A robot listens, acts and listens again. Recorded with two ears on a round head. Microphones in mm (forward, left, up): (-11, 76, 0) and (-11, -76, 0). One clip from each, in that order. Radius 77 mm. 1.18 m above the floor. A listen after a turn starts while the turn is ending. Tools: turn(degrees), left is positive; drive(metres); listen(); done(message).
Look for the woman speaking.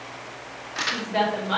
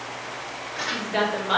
turn(degrees=-25)
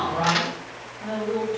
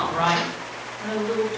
turn(degrees=-125)
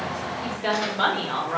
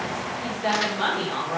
turn(degrees=25)
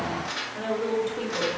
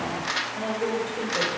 turn(degrees=15)
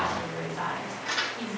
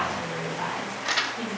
done("Facing the woman speaking, 1 to 2 m away.")